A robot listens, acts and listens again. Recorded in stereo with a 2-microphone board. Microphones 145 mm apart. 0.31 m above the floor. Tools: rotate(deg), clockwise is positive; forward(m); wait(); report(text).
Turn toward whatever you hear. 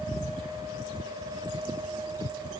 wait()
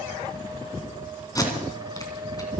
rotate(-25)
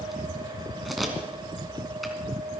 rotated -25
report("Found it: tape being pulled, straight ahead, 2 to 4 m away.")